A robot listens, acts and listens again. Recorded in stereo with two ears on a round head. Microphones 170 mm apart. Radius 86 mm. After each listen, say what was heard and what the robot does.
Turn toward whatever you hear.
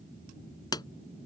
The pop: about 25° left or 155° left. Turn 25° left.
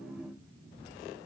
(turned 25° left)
Keep listening.
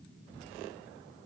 I heard a pop, but can't make it out now. It was about straight ahead or 130° left.